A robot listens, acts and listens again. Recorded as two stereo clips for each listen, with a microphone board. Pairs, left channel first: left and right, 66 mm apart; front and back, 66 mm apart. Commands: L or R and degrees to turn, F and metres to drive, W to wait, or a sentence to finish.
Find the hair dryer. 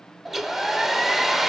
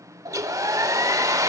R175
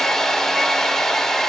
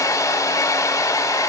L10
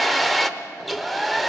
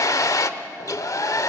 Facing the hair dryer, under 1 m away.